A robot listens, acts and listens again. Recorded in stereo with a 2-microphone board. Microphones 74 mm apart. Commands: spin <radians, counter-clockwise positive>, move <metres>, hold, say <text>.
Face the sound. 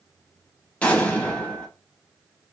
spin 0.26
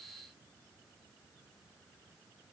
hold
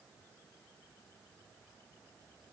say I heard an explosion, but can't make it out now. It was about straight ahead or 150° left.